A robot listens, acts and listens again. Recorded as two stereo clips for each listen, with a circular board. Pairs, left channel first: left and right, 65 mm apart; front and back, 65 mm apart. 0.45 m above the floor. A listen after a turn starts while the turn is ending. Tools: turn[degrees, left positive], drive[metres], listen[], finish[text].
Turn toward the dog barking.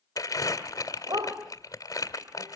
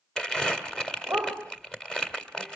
Thought: The dog barking: 110° right.
Action: turn[-110]
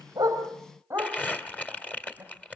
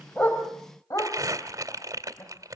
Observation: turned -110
Thought: The dog barking is now 30° right.
Action: turn[-30]
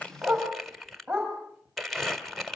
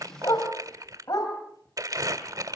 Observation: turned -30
Action: finish[Facing the dog barking, over 4 m away.]